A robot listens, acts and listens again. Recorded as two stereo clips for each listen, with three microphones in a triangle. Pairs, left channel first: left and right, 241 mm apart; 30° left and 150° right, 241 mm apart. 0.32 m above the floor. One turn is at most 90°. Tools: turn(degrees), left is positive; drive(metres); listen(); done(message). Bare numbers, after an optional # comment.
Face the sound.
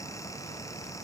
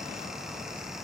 listen()
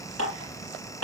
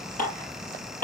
# The dishes clattering: 85° left.
turn(85)
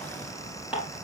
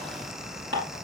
done("Found it: dishes clattering, straight ahead.")